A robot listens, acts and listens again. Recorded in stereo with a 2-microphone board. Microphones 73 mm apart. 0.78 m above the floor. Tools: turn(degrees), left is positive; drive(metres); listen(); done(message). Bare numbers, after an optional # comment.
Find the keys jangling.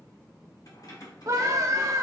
# The keys jangling: about 60° left or 120° left.
turn(60)
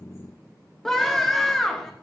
listen()
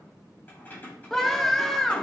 # So it is at 25° left.
turn(25)
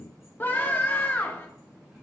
listen()
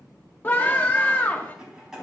done("Facing the keys jangling.")